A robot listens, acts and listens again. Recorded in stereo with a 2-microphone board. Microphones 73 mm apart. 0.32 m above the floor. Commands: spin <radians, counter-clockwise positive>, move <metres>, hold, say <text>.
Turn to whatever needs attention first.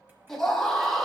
spin 0.52
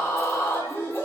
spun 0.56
spin 2.44
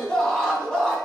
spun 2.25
spin 0.17
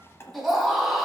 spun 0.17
say Facing the scream, 2 to 4 m away.